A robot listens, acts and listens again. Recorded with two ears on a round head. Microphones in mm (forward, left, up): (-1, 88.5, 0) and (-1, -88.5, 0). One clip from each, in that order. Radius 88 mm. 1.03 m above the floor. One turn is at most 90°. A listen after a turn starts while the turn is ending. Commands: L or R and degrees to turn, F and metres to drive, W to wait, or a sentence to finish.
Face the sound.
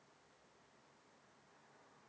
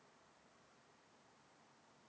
W
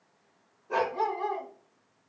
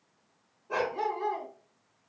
L30
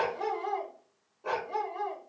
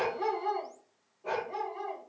L90
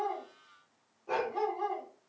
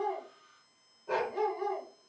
L20
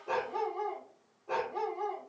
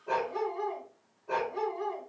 L10
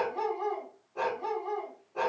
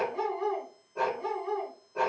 L10
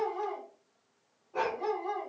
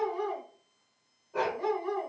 Facing the dog barking.